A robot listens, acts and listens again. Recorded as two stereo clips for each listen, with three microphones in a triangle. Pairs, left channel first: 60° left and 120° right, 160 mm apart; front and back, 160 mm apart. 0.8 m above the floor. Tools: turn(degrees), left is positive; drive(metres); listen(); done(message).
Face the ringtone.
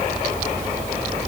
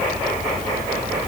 listen()
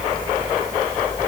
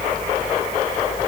listen()
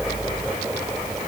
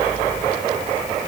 done("I can't make out a ringtone.")